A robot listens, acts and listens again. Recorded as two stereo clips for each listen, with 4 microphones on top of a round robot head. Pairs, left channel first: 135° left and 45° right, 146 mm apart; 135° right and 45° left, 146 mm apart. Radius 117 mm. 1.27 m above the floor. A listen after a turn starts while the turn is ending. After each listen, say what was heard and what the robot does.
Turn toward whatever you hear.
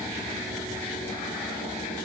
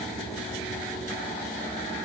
Keep listening.
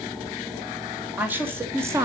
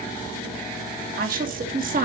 The woman speaking: 20° left. Turn 20° left.
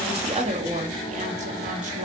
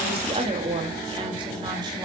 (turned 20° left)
Facing the woman speaking.